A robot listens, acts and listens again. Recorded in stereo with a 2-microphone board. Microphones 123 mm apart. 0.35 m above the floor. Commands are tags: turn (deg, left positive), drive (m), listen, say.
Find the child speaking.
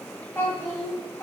<turn deg="15"/>
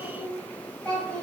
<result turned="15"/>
<turn deg="15"/>
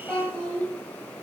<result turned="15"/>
<turn deg="30"/>
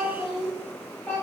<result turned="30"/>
<turn deg="30"/>
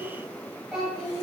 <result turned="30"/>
<turn deg="30"/>
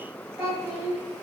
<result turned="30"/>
<turn deg="-20"/>
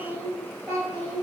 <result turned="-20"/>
<say>Found it: a child speaking, straight ahead, 1 to 2 m away.</say>